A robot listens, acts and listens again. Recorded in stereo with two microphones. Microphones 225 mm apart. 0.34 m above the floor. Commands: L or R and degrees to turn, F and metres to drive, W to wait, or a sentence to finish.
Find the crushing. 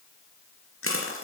L75
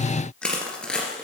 Found it: crushing, straight ahead.